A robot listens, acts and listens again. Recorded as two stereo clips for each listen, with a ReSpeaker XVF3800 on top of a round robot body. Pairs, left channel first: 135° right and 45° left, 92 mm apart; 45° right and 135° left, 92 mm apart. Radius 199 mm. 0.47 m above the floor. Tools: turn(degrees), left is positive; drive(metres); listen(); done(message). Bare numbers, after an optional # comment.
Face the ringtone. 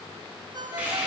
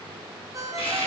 # The ringtone: 80° left.
turn(80)
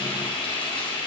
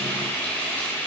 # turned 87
listen()
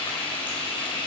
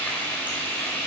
listen()
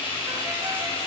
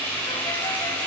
done("I heard a ringtone from this way, but can't make it out now.")